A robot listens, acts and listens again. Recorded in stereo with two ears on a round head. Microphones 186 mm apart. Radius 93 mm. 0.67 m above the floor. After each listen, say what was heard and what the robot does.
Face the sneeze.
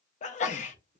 The sneeze: about 40° left or 140° left. Turn 40° left.
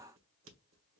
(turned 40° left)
Keep listening.
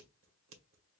I heard a sneeze, but can't make it out now. It was about straight ahead or 100° left.